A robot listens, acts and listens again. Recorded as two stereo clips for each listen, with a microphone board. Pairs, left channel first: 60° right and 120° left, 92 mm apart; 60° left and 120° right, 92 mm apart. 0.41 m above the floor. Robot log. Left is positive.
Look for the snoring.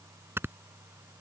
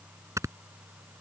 note: The snoring: 175° right.
cmd yaw -175
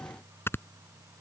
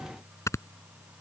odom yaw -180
end: Found it: snoring, straight ahead.